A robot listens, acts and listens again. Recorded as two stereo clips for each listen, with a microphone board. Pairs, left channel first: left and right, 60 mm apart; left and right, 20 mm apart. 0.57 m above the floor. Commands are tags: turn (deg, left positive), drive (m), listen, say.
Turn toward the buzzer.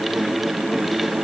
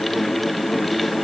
<listen/>
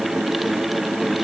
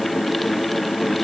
<listen/>
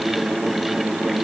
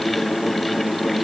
<say>I can't make out a buzzer to turn to.</say>